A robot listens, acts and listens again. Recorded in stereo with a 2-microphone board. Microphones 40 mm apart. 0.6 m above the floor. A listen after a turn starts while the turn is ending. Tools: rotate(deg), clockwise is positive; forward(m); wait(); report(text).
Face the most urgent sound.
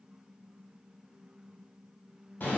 wait()
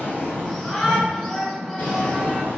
rotate(-30)
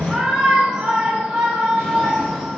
rotate(20)
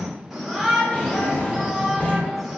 report("Facing the shout, 1 to 2 m away.")